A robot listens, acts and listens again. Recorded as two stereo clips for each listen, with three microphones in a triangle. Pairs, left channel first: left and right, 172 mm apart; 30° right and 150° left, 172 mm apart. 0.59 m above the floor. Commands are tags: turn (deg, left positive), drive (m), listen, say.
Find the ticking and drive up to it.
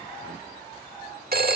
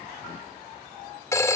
<listen/>
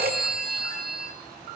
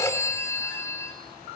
<listen/>
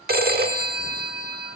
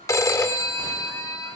<say>I can't make out ticking to turn to.</say>